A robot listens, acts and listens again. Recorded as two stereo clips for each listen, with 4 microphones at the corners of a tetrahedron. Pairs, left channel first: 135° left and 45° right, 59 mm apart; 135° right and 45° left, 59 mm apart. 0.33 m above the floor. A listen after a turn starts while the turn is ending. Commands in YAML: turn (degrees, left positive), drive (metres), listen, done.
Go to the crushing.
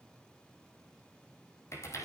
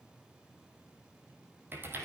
listen: true
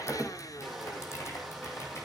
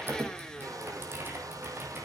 turn: 45
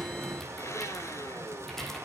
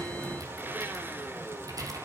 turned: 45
drive: 1.0
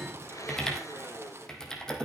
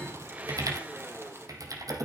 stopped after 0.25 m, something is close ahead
done: "Something is in my way. I am facing the crushing but have not reached it."